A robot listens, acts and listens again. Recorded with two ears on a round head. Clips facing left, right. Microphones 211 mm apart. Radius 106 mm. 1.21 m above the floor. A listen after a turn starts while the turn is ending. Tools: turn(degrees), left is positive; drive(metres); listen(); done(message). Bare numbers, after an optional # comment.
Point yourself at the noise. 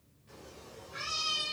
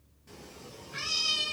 # The cat meowing: about 70° right or 110° right.
turn(-70)
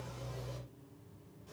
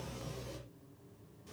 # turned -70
listen()
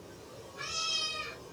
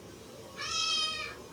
# So it is at 25° right.
turn(-25)
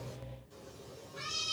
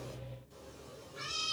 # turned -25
done("Found it: a cat meowing, straight ahead.")